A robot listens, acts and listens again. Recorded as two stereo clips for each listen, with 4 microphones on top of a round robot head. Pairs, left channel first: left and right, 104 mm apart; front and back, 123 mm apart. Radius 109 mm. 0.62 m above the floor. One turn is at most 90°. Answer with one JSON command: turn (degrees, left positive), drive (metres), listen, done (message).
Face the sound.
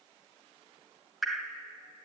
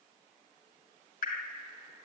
{"done": "Facing the dripping, 2 to 4 m away."}